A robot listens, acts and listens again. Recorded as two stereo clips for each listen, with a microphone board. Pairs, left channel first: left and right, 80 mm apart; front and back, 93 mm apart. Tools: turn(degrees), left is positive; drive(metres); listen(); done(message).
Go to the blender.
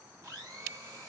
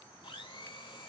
turn(degrees=-25)
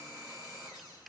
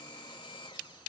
drive(metres=1.0)
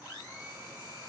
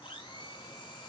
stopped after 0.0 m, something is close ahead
done("Blocked. The blender is further on, straight ahead.")